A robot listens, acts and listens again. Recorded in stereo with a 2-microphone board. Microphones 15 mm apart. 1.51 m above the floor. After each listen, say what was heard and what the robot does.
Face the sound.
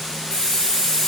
The hiss: about 55° left or 125° left. Turn 55° left.
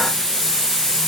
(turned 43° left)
So it is at 40° left. Turn 40° left.
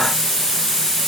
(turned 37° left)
Found it: a hiss, straight ahead.